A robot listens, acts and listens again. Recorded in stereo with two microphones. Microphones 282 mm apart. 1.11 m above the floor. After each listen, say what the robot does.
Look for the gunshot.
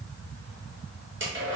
Keep listening.
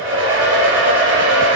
Keep listening.
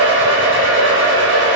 I can't make out a gunshot to turn to.